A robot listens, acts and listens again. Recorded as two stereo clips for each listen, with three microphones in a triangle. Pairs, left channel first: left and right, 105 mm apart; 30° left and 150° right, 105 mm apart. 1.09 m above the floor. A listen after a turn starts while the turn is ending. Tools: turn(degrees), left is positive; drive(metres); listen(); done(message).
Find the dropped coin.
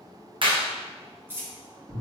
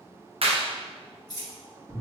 turn(degrees=-20)
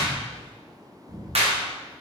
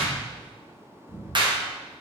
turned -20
done("Facing where the dropped coin came from. I can't hear it now.")